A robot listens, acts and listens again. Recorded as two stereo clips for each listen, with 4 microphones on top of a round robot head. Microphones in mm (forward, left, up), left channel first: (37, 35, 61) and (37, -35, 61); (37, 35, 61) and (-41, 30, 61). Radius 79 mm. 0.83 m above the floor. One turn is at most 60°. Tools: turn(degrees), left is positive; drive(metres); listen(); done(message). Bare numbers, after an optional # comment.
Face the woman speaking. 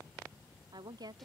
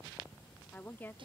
# The woman speaking: 65° right.
turn(-60)
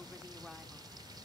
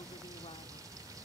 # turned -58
# Nothing new. It was at 10° right.
turn(-10)
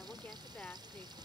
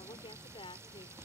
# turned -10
# The woman speaking is now 15° left.
turn(15)
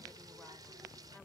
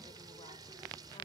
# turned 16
listen()
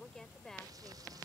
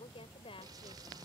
done("Facing the woman speaking.")